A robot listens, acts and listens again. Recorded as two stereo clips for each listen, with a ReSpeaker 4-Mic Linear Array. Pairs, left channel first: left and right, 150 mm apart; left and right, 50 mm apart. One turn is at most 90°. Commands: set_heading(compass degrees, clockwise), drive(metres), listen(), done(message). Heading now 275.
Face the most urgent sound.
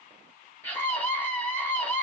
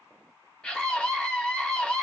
set_heading(245)
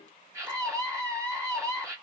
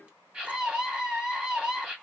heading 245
set_heading(265)
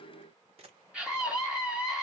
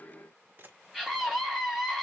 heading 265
done("Facing the scream.")